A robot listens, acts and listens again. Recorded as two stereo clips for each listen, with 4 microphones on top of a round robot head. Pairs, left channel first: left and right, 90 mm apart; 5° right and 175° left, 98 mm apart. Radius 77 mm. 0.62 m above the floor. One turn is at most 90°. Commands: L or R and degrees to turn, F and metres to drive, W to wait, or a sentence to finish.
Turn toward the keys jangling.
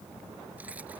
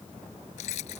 R10
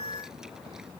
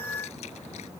W
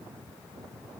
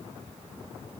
W
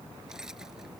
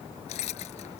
Found it: keys jangling, straight ahead.